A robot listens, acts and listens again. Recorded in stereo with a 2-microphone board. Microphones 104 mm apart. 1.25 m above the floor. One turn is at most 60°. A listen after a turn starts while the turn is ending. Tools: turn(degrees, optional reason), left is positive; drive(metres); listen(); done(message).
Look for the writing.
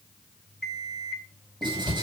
turn(degrees=-50, reason="The writing: about 50° right or 130° right.")
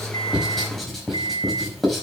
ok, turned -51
done("Facing the writing.")